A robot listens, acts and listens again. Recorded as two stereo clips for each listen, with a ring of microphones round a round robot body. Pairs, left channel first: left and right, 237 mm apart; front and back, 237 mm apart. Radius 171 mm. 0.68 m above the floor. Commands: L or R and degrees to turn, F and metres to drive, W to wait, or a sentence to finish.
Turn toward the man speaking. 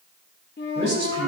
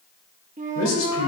L10
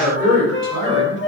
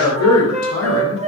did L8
Found it: a man speaking, straight ahead.